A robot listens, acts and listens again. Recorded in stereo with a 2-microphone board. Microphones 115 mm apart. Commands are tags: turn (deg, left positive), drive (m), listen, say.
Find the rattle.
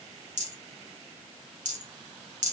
<turn deg="-90"/>
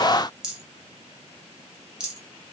<say>Found it: a rattle, straight ahead, 1 to 2 m away.</say>